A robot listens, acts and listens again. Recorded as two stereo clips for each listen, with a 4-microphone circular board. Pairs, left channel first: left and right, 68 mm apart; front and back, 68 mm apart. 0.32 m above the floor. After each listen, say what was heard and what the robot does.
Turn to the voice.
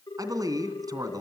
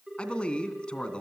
The man speaking: 75° right. Turn 75° right.
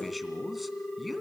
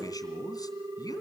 Found it: a man speaking, straight ahead.